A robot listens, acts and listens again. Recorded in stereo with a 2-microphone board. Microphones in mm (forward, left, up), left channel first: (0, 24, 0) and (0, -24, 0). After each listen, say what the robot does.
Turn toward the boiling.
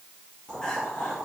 Turn 30° right.
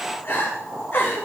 Turn 145° right.
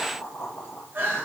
Turn 40° left.
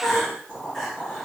Turn 10° right.
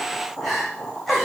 Facing the boiling, over 4 m away.